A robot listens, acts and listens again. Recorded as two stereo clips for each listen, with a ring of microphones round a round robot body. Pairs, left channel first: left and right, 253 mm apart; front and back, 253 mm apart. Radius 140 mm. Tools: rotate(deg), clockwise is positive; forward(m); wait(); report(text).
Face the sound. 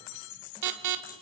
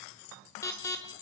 rotate(80)
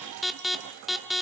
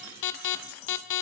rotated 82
report("Facing the alarm, 1 to 2 m away.")